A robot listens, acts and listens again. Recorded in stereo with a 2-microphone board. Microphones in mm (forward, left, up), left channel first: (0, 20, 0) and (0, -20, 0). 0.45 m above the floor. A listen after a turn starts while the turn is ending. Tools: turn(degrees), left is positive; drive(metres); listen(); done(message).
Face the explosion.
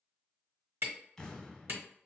turn(degrees=30)
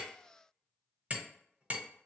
listen()
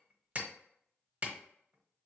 done("I heard an explosion, but can't make it out now. It was about 15° right or 135° left.")